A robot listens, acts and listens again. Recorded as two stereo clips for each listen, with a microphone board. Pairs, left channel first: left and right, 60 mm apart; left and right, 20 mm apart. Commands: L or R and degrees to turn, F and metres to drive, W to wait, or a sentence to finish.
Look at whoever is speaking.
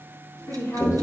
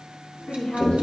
L65
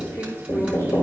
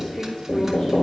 W
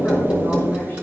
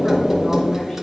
W
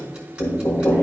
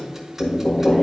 I heard a woman speaking, but can't make it out now. It was about straight ahead or 50° left.